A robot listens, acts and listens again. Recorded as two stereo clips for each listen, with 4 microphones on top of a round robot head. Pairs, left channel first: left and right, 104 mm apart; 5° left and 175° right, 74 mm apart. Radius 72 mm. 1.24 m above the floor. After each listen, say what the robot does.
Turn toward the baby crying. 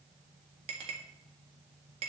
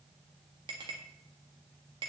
Keep listening.
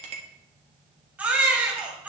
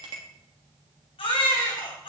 Turn 15° right.
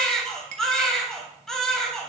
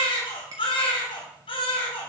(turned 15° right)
Found it: a baby crying, straight ahead, 2 to 4 m away.